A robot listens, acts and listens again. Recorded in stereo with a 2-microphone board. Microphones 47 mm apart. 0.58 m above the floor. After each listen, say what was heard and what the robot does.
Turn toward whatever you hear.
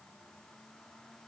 Keep listening.
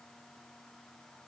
Keep listening.
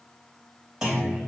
Turn 30° right.
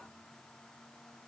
Keep listening.
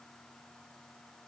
I heard a clunk, but can't make it out now. It was about 20° left or 140° right.